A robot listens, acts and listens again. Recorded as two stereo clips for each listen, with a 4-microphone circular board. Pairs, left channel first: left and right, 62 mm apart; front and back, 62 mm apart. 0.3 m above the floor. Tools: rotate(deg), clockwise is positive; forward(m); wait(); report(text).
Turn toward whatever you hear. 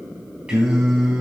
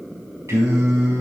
rotate(170)
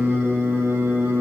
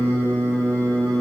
rotate(60)
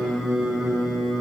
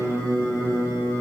rotate(20)
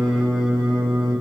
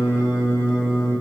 rotate(25)
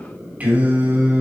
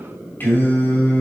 rotate(40)
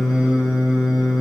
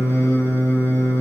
rotate(15)
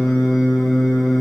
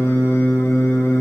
report("Facing the singing.")